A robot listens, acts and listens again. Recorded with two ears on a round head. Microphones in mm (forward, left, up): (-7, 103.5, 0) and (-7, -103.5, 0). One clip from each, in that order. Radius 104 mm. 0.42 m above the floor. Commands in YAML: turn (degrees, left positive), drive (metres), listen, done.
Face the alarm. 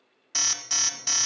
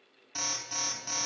turn: 65
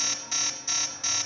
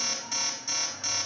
turn: 20
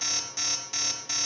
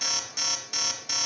done: "Facing the alarm, 1 to 2 m away."